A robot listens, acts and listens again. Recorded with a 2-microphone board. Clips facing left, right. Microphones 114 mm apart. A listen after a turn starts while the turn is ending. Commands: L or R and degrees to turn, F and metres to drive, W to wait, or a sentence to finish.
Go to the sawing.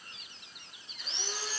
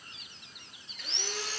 R65
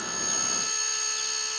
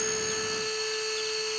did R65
R50
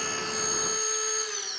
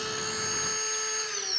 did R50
L10
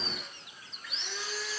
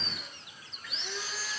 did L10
F1.0
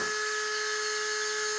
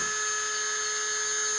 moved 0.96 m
F1.0
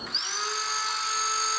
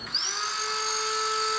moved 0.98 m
F1.0
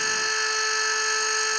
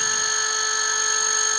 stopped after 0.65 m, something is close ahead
R10
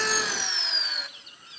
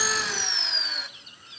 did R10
I am next to the sawing.